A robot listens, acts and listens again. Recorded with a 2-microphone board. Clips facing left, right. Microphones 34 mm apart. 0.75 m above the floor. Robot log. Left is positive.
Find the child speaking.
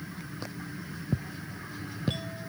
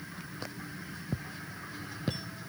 cmd idle
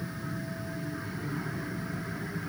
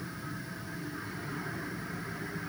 cmd idle
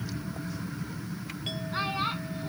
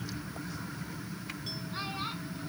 note: The child speaking: about 25° left or 155° left.
cmd yaw +25
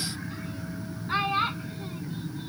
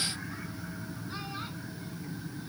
note: So it is at 130° left.
cmd yaw +130
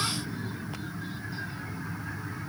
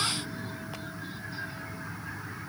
cmd idle
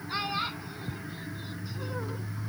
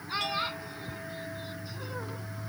end: Found it: a child speaking, straight ahead.